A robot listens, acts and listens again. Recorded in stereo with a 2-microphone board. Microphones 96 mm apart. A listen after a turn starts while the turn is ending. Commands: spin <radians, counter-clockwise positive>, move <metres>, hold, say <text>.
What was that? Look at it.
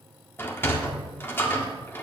spin 0.44
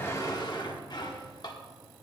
spin 2.27
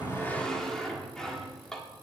say Found it: a sliding door, straight ahead, 1 to 2 m away.